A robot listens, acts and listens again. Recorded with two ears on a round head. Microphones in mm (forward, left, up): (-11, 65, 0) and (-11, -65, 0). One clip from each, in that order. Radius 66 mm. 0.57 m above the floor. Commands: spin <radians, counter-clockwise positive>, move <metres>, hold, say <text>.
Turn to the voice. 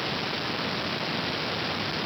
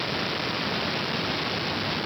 hold
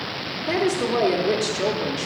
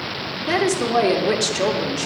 spin -0.52
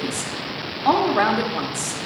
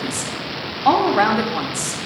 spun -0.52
say Found it: a woman speaking, straight ahead.